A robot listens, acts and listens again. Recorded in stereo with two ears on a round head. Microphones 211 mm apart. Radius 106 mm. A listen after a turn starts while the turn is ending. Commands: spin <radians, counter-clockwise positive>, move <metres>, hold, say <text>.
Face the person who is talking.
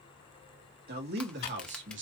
spin -0.96
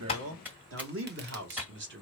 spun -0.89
spin -0.87
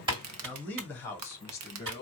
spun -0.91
spin 0.26
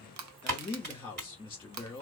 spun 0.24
spin 0.17
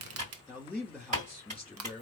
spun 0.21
say Found it: a man speaking, straight ahead.